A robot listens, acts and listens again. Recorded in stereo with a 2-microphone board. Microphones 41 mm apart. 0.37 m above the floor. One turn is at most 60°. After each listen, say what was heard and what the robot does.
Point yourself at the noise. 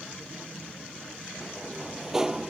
Turn 30° right.
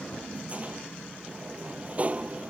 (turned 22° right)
So it is at 145° right. Turn 60° right.
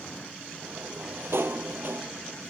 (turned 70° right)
The sliding door is now 75° right. Turn 60° right.
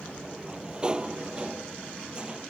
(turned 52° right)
The sliding door is now 25° right. Turn 25° right.
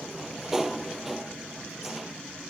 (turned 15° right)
The sliding door is now 10° right. Turn 10° right.
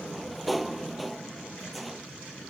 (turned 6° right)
Found it: a sliding door, straight ahead.